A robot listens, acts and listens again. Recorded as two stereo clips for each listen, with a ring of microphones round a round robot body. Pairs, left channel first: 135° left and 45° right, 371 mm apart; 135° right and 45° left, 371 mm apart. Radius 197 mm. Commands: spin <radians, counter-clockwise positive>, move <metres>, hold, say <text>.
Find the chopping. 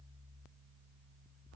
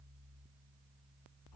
hold
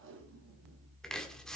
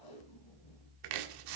spin 0.79
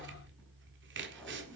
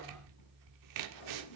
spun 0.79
spin 0.26
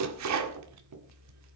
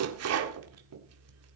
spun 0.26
say Facing the chopping, 1 to 2 m away.